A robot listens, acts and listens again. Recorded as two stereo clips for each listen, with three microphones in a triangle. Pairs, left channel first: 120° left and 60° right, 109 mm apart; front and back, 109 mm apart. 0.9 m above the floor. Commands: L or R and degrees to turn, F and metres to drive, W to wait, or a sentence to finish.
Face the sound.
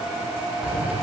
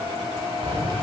R140
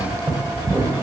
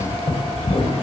Found it: keys jangling, straight ahead.